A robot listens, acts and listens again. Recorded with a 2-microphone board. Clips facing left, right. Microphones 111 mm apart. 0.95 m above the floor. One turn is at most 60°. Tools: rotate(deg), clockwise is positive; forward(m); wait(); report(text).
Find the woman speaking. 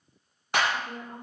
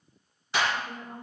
rotate(-60)
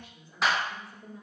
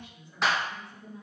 rotate(-40)
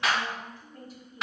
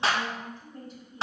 report("Facing the woman speaking.")